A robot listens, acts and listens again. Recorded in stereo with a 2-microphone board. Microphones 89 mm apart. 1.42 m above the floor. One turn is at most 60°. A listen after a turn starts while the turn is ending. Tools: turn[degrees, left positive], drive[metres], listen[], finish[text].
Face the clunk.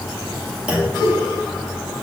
Action: turn[-30]
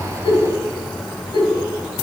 Action: listen[]
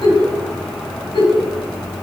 Action: finish[I heard a clunk, but can't make it out now. It was about 20° left or 140° right.]